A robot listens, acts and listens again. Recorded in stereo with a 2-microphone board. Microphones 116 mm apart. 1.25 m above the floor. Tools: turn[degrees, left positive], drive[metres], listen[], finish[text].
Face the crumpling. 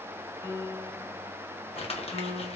Thought: The crumpling: about 60° left or 120° left.
Action: turn[60]
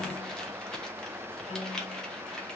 Action: finish[Facing the crumpling, under 1 m away.]